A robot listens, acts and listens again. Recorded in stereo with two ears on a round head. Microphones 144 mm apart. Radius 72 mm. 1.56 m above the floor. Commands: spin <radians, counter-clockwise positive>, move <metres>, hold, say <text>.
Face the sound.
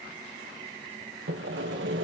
spin -1.57
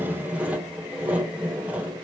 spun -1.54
spin -0.17
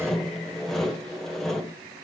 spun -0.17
say Facing the sawing, 1 to 2 m away.